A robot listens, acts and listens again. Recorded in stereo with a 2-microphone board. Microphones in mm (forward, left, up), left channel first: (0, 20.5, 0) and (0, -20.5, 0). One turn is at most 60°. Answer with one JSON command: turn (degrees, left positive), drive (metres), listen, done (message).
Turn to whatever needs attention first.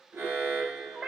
{"turn": -60}
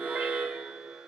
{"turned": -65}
{"turn": -35}
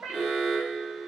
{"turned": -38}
{"done": "Found it: an alarm, straight ahead."}